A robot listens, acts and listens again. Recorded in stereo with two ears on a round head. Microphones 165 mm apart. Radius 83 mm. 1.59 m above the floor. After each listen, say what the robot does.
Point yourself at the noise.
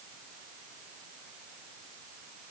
Keep listening.
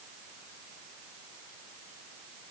Keep listening.
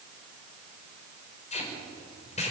Turn 35° left.
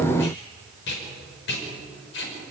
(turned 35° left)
Turn 110° left.
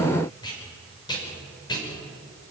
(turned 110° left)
Turn 25° left.
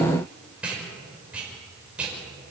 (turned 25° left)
Facing the tape being pulled.